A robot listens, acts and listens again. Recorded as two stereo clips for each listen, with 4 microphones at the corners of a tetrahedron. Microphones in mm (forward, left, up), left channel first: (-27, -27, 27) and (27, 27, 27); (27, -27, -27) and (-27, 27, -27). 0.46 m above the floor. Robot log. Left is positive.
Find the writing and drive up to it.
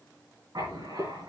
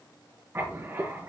note: The writing: 75° left.
cmd yaw +75
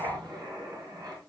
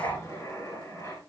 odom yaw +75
note: The writing is now 15° left.
cmd yaw +15
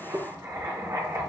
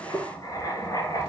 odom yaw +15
cmd fwd 1.0
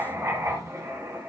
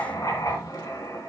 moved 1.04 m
cmd fwd 1.0
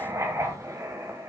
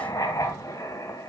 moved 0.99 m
cmd fwd 1.0
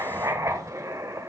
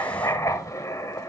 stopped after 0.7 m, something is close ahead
end: I am next to the writing.